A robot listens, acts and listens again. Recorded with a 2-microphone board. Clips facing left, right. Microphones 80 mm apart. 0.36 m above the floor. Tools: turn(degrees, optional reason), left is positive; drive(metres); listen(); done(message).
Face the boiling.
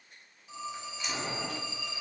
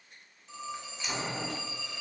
turn(degrees=-25, reason="The boiling: about 25° right or 155° right.")
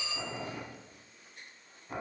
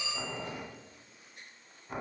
done("Facing the boiling.")